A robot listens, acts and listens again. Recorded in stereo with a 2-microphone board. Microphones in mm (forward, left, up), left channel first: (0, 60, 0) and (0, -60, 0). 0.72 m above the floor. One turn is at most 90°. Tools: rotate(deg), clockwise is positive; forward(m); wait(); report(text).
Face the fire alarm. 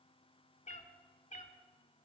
wait()
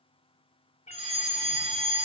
rotate(60)
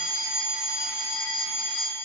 rotate(10)
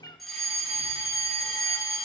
report("Found it: a fire alarm, straight ahead, 2 to 4 m away.")